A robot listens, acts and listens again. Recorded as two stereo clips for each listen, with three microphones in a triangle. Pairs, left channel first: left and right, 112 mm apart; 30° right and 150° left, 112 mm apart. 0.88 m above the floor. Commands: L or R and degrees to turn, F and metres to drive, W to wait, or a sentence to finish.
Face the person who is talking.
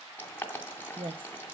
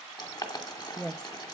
R115
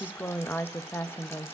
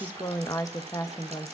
L20
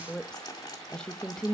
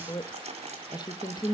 L10
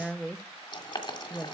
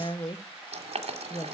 Found it: a woman speaking, straight ahead, under 1 m away.